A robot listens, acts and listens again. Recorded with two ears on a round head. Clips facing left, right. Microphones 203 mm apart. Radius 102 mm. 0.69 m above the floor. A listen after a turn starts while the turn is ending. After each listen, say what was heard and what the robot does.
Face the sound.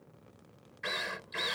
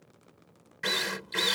The drill: about 65° right or 115° right. Turn 65° right.
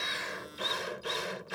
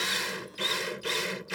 So it is at 40° right. Turn 40° right.
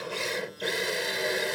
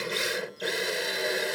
Facing the drill.